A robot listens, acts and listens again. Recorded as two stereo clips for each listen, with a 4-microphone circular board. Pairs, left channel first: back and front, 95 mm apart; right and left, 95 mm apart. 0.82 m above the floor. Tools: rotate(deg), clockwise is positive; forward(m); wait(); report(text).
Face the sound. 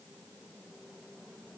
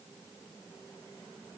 wait()
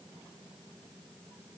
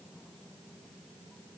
wait()
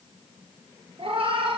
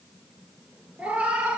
rotate(-15)
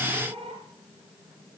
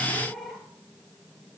report("Facing the cat meowing, 2 to 4 m away.")